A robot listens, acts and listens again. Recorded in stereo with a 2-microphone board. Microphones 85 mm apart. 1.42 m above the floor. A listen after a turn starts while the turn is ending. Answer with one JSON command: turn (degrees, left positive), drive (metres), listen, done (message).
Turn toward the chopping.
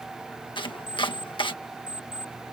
{"turn": 90}
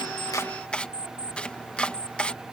{"turn": 15}
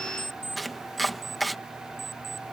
{"done": "Facing the chopping."}